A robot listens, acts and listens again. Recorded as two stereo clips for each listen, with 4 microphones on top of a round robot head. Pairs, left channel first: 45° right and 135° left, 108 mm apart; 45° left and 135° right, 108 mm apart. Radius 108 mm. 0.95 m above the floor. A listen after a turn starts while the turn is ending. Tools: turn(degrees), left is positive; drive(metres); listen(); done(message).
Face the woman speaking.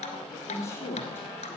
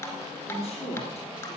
turn(degrees=20)
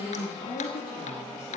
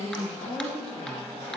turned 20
turn(degrees=15)
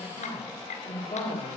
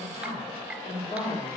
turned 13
turn(degrees=15)
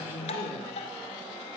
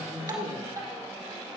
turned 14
done("Found it: a woman speaking, straight ahead.")